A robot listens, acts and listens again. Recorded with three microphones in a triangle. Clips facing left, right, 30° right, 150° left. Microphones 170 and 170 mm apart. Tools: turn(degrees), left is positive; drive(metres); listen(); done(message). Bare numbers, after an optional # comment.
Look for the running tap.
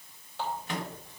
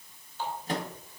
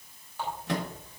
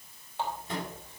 # The running tap: 80° left.
turn(80)
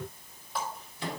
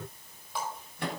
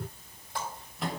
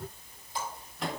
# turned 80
done("Found it: a running tap, straight ahead, over 4 m away.")